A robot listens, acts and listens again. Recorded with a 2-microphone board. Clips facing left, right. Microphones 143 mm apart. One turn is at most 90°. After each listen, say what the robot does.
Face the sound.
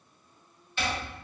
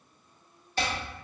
Turn 40° right.
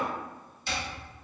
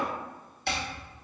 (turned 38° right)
Turn 90° right.
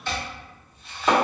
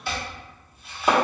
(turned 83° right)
Turn 10° right.
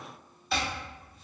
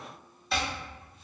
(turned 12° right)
Found it: chopping, straight ahead.